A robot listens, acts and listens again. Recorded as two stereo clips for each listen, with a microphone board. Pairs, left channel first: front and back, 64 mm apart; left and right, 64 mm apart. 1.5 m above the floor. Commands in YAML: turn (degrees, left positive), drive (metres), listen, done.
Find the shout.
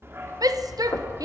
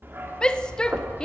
turn: 165
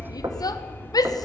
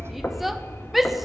done: "Found it: a shout, straight ahead."